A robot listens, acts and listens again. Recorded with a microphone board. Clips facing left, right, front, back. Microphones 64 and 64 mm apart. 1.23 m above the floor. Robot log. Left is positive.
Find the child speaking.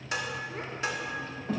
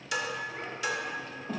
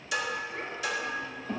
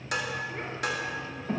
note: The child speaking: 110° left.
cmd yaw +110
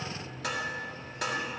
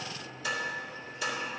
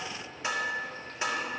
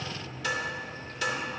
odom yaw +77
note: Nothing new. It was at 35° left.
cmd yaw +35
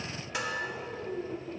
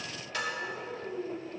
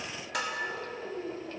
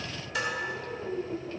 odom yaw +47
note: The child speaking is now 10° left.
cmd yaw +10
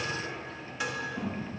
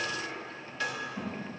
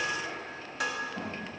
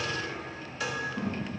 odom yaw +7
note: The child speaking is now 10° left.
cmd yaw +10
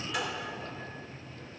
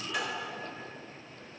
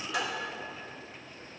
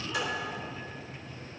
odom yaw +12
cmd idle
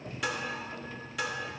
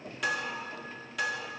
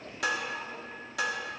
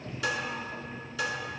cmd idle
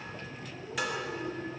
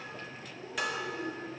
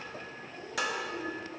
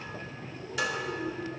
end: Found it: a child speaking, straight ahead, over 4 m away.